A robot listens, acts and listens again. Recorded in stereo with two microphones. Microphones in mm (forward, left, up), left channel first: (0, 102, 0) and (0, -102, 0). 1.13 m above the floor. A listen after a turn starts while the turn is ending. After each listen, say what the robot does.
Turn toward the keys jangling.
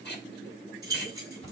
Turn 20° right.
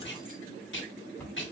Keep listening.
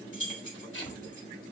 Turn 140° right.
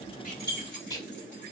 Turn 60° right.
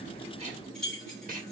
Facing the keys jangling.